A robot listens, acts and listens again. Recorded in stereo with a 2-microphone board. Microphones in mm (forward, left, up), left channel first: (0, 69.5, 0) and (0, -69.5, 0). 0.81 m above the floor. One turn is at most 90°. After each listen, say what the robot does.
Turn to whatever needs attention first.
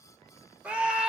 Turn 30° right.
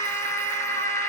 Turn 20° left.
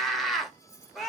Facing the scream.